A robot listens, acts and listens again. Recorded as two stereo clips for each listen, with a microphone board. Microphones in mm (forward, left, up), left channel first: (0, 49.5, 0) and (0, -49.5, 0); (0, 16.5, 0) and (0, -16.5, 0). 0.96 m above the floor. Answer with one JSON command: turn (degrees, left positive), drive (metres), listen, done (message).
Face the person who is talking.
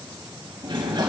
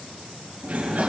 {"listen": true}
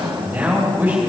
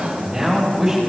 {"turn": -20}
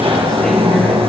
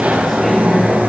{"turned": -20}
{"listen": true}
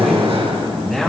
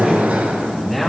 {"done": "Facing the man speaking."}